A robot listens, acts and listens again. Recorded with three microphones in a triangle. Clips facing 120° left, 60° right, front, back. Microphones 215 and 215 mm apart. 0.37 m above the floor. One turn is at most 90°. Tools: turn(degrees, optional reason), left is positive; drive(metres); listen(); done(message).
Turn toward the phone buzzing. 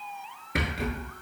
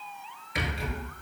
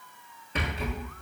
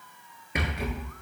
listen()
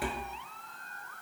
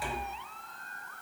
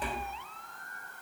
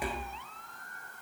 listen()
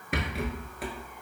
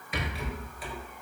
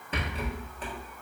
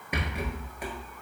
done("I can't make out a phone buzzing to turn to.")